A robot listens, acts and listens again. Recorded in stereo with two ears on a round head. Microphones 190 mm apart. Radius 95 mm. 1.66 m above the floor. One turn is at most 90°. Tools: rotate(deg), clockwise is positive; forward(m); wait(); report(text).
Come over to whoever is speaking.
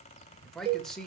rotate(-30)
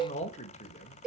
rotate(-90)
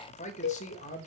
rotate(-35)
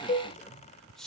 forward(1.0)
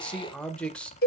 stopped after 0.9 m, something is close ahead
report("I am next to the man speaking.")